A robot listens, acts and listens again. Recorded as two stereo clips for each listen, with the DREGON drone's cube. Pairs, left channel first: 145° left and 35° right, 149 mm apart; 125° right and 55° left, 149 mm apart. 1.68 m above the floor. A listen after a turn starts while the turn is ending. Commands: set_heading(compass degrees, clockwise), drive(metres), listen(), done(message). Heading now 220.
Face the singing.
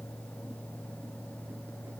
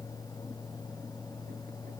listen()
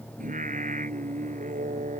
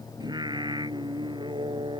done("Facing the singing.")